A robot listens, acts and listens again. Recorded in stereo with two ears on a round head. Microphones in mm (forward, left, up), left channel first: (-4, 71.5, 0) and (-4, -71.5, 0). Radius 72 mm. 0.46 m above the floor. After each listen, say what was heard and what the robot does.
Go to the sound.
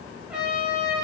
Turn 30° right.
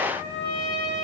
So it is at 145° right. Turn 145° right.
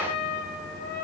Drive 1.0 m forward.
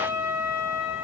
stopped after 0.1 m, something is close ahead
The trumpet is now 10° right. Turn 10° right.
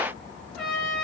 Blocked. The trumpet is further on, straight ahead.